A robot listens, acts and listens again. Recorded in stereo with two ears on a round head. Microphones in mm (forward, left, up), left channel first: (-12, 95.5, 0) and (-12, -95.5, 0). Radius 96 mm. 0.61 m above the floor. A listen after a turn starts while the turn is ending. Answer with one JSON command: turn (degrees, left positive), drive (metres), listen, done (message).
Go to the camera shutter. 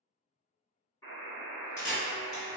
{"turn": 55}
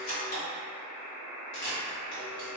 {"turn": 50}
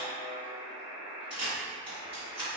{"turn": -10}
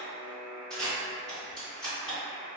{"drive": 1.0}
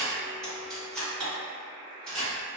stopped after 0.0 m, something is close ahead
{"done": "Something is in my way. I am facing the camera shutter but have not reached it."}